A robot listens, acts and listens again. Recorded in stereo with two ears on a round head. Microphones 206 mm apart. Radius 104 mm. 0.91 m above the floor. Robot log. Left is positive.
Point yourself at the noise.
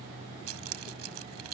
cmd yaw -90
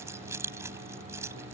note: So it is at 10° right.
cmd yaw -10
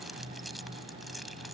end: Found it: keys jangling, straight ahead.